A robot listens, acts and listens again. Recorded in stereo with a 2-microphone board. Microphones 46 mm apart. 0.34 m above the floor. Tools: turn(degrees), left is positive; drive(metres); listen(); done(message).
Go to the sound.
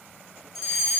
turn(degrees=30)
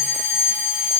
turn(degrees=-35)
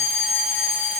turn(degrees=-10)
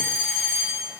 drive(metres=1.0)
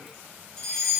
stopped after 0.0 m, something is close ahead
done("Something is in my way. I am facing the fire alarm but have not reached it.")